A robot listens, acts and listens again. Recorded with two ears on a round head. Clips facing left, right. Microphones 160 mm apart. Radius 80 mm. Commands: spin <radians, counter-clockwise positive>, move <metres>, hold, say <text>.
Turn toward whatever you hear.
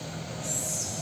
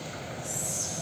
spin 0.70
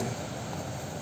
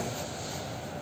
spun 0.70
hold
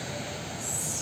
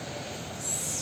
spin 0.17
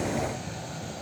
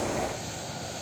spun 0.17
hold
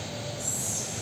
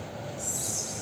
say Facing the whispering.